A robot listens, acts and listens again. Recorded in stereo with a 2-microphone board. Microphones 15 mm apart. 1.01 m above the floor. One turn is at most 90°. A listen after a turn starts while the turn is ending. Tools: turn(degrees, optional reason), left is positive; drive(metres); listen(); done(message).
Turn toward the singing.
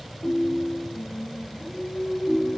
turn(degrees=30)
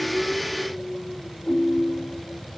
turn(degrees=90, reason="So it is at 150° left.")
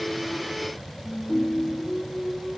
turn(degrees=60, reason="The singing is now 60° left.")
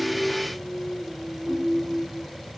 done("Facing the singing, 2 to 4 m away.")